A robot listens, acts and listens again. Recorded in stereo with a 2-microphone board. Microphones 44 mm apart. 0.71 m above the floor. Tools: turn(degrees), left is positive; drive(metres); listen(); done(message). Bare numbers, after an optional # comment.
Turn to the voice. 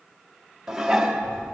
# The child speaking: about 35° left or 145° left.
turn(35)
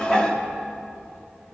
# So it is at 110° left.
turn(110)
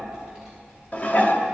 # The child speaking is now 15° right.
turn(-15)
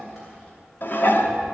done("Found it: a child speaking, straight ahead.")